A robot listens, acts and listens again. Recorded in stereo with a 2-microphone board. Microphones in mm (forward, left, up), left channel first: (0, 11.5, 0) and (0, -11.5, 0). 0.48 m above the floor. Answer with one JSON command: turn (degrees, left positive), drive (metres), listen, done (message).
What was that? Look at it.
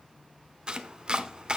{"turn": -35}
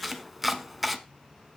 {"done": "Found it: chopping, straight ahead, 1 to 2 m away."}